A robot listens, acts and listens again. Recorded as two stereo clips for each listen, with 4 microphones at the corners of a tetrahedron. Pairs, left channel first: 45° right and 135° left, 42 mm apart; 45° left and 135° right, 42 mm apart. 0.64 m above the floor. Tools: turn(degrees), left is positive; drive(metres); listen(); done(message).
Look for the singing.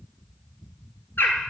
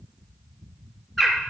listen()
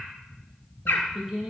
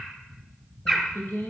turn(degrees=45)
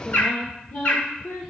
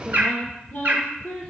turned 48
turn(degrees=-15)
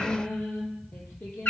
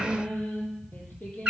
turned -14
turn(degrees=-10)
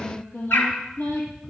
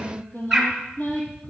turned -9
done("Found it: singing, straight ahead.")